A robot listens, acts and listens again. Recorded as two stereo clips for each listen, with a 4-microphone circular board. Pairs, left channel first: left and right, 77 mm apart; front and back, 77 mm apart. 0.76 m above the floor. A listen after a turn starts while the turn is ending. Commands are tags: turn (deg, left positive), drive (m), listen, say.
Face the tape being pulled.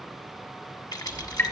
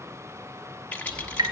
<listen/>
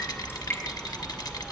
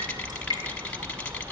<listen/>
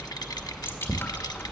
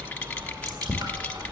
<say>I can't make out tape being pulled, only a rattle and dripping.</say>